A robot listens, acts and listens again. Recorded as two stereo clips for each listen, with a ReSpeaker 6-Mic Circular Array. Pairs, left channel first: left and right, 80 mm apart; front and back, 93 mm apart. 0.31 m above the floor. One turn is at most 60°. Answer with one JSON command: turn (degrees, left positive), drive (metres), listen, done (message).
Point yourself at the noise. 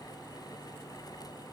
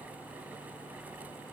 {"listen": true}
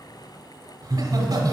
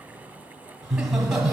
{"turn": -60}
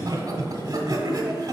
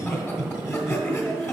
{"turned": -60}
{"turn": -55}
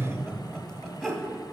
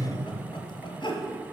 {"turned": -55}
{"done": "Facing the laughter, 1 to 2 m away."}